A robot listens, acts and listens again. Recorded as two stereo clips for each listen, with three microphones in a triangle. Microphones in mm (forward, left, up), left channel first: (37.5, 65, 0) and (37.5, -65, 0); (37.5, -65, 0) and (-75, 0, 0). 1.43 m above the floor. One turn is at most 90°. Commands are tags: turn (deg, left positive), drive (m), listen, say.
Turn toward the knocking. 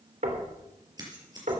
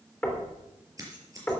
<turn deg="-90"/>
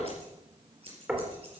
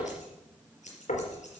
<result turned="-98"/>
<turn deg="-10"/>
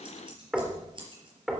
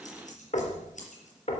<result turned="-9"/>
<say>Found it: knocking, straight ahead.</say>